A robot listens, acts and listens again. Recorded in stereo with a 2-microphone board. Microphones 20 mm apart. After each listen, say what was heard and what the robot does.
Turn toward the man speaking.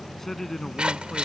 The man speaking: about 20° left or 160° left. Turn 20° left.
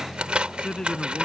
So it is at 140° left. Turn 140° left.
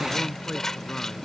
Keep listening.
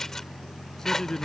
The man speaking is now 25° left. Turn 25° left.
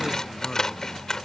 Keep listening.
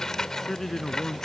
The man speaking is now 15° left. Turn 15° left.
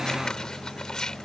Keep listening.
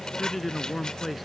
Found it: a man speaking, straight ahead.